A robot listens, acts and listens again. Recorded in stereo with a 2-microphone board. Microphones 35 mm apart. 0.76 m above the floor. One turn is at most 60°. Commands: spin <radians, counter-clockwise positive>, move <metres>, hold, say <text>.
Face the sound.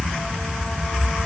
hold
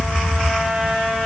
hold
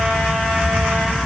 say I can't make out anything to turn to.